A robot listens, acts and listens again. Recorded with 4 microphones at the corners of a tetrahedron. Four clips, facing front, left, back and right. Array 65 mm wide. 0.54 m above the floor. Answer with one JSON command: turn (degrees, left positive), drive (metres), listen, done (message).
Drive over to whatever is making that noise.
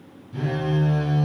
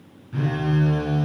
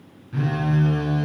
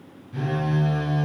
{"turn": 135}
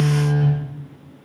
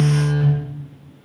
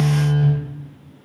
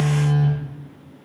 {"turn": 60}
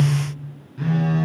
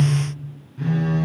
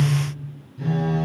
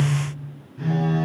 {"drive": 1.0}
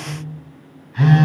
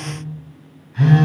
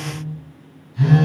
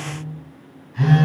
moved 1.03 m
{"drive": 1.0}
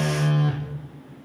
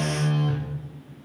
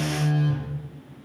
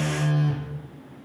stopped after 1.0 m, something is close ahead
{"turn": -10}
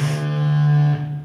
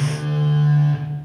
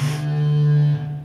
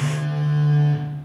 {"done": "Arrived at the phone buzzing, straight ahead."}